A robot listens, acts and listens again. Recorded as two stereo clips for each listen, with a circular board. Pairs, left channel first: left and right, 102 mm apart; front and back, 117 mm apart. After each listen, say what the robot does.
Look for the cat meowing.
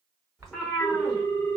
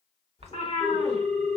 Facing the cat meowing, 1 to 2 m away.